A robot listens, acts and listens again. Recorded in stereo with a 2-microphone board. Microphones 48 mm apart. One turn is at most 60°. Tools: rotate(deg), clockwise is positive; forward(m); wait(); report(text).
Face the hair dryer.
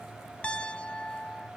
wait()
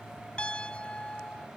wait()
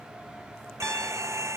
rotate(60)
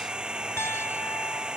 rotate(15)
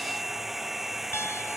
report("Facing the hair dryer.")